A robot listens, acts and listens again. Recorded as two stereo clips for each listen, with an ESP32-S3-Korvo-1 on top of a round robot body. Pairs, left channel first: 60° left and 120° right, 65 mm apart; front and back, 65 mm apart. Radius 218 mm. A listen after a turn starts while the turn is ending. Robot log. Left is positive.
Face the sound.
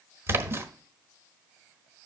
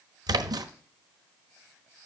note: The splash: 175° right.
cmd yaw -175
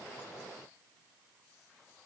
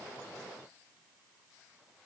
end: I heard a splash from this way, but can't make it out now.